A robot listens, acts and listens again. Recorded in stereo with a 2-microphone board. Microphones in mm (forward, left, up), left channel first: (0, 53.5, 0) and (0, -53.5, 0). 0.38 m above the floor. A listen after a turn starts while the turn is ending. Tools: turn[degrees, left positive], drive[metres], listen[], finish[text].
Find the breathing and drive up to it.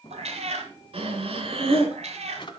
Thought: The breathing: about 65° right or 115° right.
Action: turn[-65]
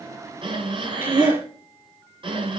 Thought: So it is at 50° right.
Action: turn[-50]
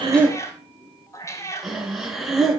Action: drive[1.0]
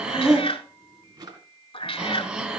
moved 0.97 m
Thought: The breathing is now 10° right.
Action: turn[-10]
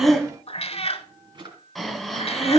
Action: drive[1.0]
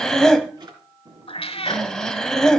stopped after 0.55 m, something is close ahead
Action: finish[Arrived at the breathing, straight ahead.]